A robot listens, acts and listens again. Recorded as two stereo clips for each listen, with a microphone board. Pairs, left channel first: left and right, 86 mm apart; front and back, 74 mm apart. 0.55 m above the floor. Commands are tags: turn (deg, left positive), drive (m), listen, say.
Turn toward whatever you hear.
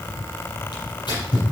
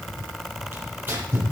<turn deg="120"/>
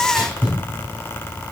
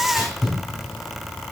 <turn deg="-20"/>
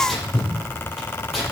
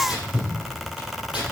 <say>Found it: tearing paper, straight ahead.</say>